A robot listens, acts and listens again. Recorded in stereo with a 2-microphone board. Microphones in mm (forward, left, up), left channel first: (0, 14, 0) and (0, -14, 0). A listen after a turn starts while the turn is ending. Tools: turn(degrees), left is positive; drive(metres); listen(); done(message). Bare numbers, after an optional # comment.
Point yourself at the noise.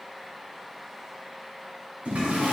# The toilet flushing: about 65° right or 115° right.
turn(-65)
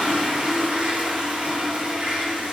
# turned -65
# So it is at 50° right.
turn(-50)
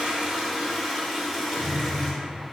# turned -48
done("Found it: a toilet flushing, straight ahead.")